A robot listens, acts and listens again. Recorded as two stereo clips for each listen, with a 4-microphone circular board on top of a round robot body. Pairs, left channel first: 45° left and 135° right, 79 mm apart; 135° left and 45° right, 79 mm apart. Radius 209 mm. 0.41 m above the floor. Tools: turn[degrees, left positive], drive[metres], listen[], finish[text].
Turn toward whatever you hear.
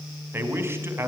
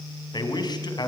Thought: The man speaking: 165° left.
Action: turn[165]
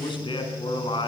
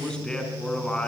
Thought: The man speaking is now 55° left.
Action: turn[55]
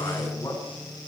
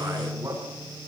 Thought: The man speaking is now 10° left.
Action: turn[10]
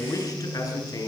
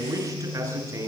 Action: finish[Found it: a man speaking, straight ahead, over 4 m away.]